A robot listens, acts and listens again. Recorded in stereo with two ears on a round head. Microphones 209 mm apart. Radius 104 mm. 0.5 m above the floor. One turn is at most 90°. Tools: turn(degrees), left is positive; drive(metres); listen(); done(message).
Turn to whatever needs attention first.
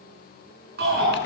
turn(degrees=-45)
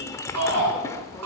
turn(degrees=-90)
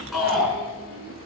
done("Found it: a shout, straight ahead.")